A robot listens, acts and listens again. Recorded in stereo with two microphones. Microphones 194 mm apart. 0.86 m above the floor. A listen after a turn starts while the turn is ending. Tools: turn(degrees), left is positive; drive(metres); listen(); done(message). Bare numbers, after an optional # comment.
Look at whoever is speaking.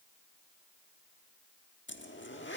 listen()
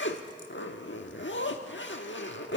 listen()
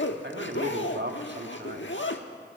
# The man speaking: about 65° right or 115° right.
turn(-65)
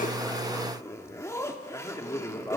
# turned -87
# So it is at 15° left.
turn(15)
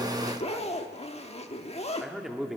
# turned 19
done("Facing the man speaking, 1 to 2 m away.")